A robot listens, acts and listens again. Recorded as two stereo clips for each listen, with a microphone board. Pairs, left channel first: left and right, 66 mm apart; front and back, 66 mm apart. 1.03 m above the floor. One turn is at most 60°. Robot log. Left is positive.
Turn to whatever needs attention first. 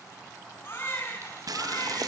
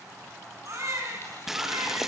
note: The baby crying: 145° left.
cmd yaw +60
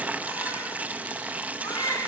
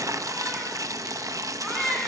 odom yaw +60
note: The baby crying is now 85° left.
cmd yaw +60
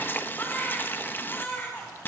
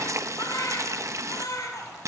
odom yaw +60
note: The baby crying is now 30° left.
cmd yaw +30
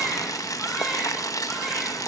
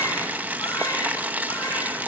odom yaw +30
cmd idle
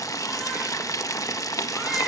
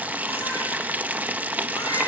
cmd idle
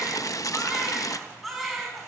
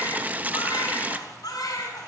end: Facing the baby crying.